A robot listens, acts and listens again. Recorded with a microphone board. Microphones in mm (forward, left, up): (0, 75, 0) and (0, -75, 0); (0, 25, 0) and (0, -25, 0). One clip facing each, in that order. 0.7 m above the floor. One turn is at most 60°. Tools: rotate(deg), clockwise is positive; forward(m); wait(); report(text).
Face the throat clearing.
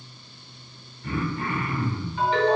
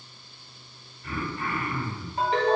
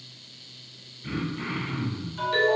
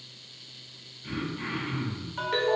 rotate(-25)
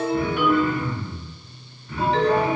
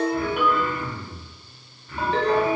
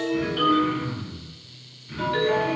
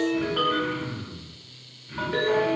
report("Found it: throat clearing, straight ahead, 2 to 4 m away.")